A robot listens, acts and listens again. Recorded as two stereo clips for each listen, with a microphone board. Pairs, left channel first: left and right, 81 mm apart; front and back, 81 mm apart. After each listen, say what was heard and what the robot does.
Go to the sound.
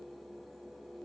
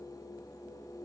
Keep listening.
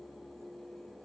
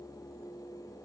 Keep listening.
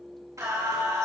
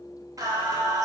The singing: 135° right. Turn 135° right.
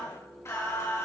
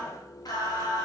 The singing is now 35° left. Turn 35° left.
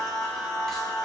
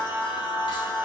Drive 1.0 m forward.
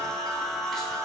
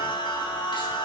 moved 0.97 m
Drive 1.0 m forward.
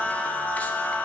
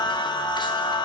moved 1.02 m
The singing is now 20° left. Turn 20° left.
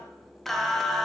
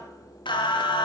Drive 1.0 m forward.
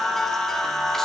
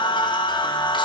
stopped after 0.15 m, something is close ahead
Arrived at the singing, straight ahead.